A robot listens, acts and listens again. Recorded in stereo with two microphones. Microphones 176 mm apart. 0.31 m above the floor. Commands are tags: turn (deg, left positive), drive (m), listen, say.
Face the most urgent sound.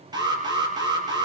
<turn deg="-25"/>
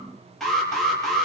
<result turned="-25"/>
<say>Facing the alarm, over 4 m away.</say>